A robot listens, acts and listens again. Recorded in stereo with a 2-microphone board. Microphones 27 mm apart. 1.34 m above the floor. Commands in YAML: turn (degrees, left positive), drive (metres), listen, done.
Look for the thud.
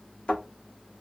turn: 45
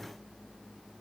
listen: true
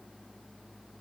done: "I heard a thud, but can't make it out now. It was about straight ahead or 90° left."